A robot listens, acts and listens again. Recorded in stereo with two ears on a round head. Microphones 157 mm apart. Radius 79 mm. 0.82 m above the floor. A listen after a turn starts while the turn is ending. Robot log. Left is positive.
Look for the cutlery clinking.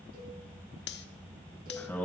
note: The cutlery clinking: about 65° left or 115° left.
cmd yaw +65
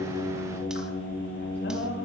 cmd idle
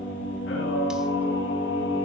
cmd idle
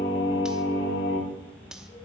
end: Facing the cutlery clinking.